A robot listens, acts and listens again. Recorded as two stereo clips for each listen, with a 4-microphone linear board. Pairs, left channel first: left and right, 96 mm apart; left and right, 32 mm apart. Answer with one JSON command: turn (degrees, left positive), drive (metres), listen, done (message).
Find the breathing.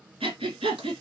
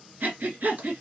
{"turn": -90}
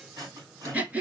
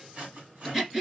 {"turn": -15}
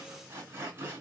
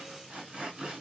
{"listen": true}
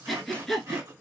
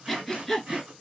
{"done": "Facing the breathing."}